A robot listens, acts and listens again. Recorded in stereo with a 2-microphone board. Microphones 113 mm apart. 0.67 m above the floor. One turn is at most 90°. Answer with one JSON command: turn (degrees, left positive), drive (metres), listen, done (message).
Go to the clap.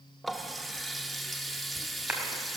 {"turn": -30}
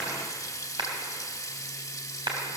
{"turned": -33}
{"turn": -90}
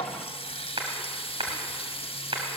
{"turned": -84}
{"turn": -50}
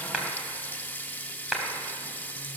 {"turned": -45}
{"drive": 1.0}
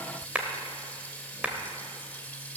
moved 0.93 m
{"turn": -10}
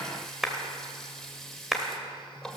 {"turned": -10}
{"drive": 1.0}
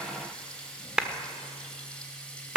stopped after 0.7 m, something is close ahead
{"turn": -10}
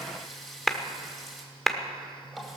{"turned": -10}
{"done": "I am next to the clap."}